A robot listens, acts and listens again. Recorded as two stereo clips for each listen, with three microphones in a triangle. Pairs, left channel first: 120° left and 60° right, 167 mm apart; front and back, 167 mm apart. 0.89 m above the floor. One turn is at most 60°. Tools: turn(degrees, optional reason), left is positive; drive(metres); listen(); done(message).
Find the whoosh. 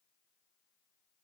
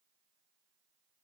listen()
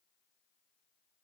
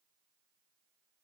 listen()
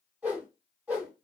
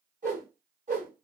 turn(degrees=-60, reason="The whoosh: 140° right.")
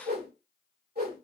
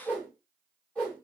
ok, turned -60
turn(degrees=-60, reason="The whoosh is now 80° right.")
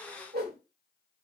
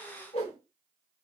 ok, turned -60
turn(degrees=-50, reason="The whoosh is now 50° right.")
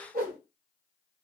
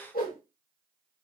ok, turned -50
turn(degrees=-25, reason="The whoosh is now 25° right.")
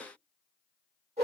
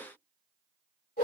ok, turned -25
turn(degrees=-10, reason="The whoosh is now 10° right.")
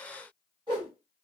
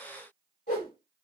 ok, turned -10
done("Found it: a whoosh, straight ahead.")